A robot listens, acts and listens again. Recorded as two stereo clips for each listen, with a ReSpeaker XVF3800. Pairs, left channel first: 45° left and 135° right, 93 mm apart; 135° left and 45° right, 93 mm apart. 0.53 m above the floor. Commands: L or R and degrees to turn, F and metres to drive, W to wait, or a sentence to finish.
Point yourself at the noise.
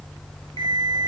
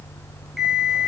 R130
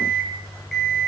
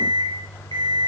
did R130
R45
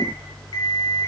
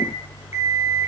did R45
L10
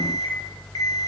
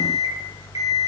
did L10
Found it: an alarm clock, straight ahead, 2 to 4 m away.